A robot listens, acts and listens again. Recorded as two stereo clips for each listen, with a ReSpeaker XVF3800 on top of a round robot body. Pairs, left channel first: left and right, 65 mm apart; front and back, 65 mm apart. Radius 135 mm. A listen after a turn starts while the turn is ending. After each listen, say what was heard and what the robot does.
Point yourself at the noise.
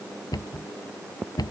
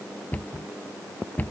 The cupboard door: 65° left. Turn 65° left.
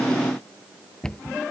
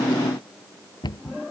The cupboard door is now 10° left. Turn 10° left.
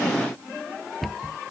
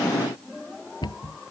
Facing the cupboard door.